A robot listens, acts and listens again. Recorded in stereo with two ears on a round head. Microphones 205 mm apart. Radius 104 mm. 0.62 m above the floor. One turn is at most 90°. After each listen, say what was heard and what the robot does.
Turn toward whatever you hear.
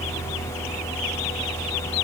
Keep listening.
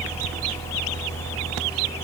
Keep listening.
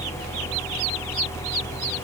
I can't make out anything.